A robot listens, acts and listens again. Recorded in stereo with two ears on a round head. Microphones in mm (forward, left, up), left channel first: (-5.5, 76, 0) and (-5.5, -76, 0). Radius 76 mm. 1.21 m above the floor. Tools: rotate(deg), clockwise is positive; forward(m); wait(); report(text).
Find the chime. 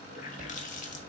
rotate(45)
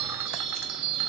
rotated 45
rotate(90)
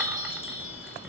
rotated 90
report("Found it: a chime, straight ahead.")